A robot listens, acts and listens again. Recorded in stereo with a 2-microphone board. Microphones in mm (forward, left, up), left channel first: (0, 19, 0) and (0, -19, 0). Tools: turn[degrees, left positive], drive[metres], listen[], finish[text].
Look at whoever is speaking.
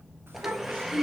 Thought: The child speaking: about 70° right or 110° right.
Action: turn[-70]
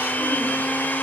Action: listen[]
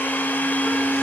Action: listen[]
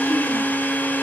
Action: finish[I heard a child speaking, but can't make it out now. It was about straight ahead or 40° right.]